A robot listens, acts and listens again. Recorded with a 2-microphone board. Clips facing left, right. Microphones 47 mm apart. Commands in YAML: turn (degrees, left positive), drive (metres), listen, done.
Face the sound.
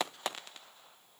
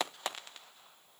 listen: true
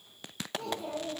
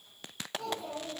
turn: 40
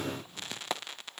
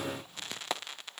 listen: true
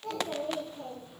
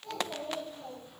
turn: 115
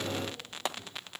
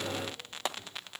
listen: true
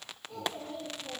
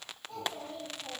done: "Found it: a child speaking, straight ahead, over 4 m away."